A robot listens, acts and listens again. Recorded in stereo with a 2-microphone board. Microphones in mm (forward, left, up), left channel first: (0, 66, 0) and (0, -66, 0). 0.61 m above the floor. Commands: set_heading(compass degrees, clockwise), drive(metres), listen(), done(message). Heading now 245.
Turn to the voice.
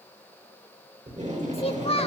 set_heading(200)
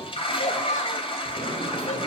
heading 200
listen()
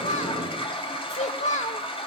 set_heading(120)
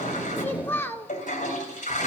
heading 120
set_heading(100)
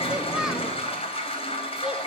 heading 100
listen()
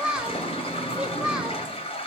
set_heading(110)
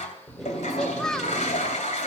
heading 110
done("Found it: a child speaking, straight ahead.")